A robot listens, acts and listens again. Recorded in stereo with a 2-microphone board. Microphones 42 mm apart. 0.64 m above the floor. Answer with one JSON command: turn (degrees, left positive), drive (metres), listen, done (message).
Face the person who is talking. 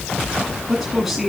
{"turn": 30}
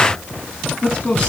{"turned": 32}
{"turn": 150}
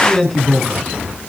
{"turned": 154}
{"done": "Facing the man speaking."}